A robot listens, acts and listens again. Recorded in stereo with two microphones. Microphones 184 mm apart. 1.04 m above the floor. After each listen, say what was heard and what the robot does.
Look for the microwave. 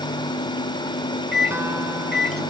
The microwave: about 60° right or 120° right. Turn 60° right.
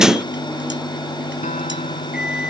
Keep listening.
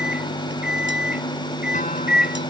Facing the microwave.